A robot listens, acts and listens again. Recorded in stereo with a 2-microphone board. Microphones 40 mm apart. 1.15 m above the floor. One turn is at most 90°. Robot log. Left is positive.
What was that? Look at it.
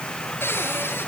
cmd yaw +90
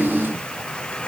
cmd idle
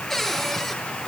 note: The cupboard door is now 10° left.
cmd yaw +10
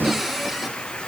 end: Found it: a cupboard door, straight ahead.